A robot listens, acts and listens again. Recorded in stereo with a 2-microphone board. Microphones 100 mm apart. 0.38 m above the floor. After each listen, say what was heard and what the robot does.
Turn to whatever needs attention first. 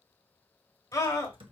The scream: about 35° left or 145° left. Turn 35° left.
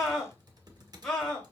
Found it: a scream, straight ahead.